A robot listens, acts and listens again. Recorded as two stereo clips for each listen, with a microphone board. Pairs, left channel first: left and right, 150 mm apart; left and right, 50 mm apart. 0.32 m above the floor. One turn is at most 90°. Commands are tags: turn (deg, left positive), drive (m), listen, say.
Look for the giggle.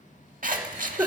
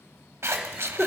<turn deg="-15"/>
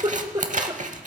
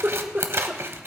<turn deg="-90"/>
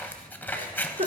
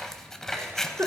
<turn deg="-65"/>
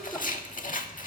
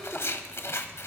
<listen/>
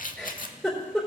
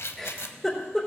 <say>Found it: a giggle, straight ahead.</say>